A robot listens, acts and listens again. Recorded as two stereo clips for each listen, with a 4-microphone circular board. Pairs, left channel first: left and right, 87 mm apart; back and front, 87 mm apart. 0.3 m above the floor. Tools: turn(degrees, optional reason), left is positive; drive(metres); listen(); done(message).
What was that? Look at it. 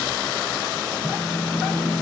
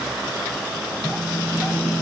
turn(degrees=135, reason="The phone buzzing: 135° left.")
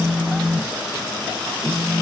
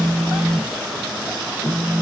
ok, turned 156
turn(degrees=-20, reason="The phone buzzing is now 20° right.")
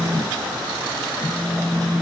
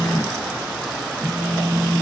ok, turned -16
done("Found it: a phone buzzing, straight ahead, 1 to 2 m away.")